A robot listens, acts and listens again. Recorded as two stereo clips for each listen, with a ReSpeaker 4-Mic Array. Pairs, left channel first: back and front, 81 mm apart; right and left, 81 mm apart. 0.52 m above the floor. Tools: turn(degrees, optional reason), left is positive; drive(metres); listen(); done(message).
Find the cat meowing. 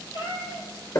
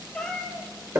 turn(degrees=-175, reason="The cat meowing: 175° right.")
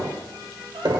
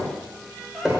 listen()
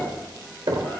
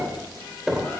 listen()
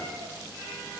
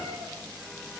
done("I heard a cat meowing from this way, but can't make it out now.")